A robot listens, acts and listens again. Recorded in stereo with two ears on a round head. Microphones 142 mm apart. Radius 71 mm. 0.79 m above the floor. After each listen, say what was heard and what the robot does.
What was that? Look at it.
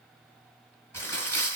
The crumpling: about 15° left or 165° left. Turn 15° left.
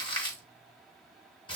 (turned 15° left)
So it is at 150° left. Turn 150° left.
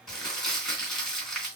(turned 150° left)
Facing the crumpling.